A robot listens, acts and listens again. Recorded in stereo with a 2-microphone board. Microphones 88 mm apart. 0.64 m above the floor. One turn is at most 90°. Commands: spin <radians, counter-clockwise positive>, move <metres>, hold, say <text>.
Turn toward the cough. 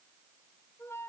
hold
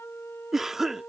spin -0.52
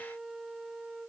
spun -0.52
hold
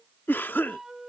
spin 0.44
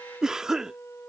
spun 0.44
spin -0.17
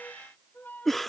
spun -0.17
say Found it: a cough, straight ahead.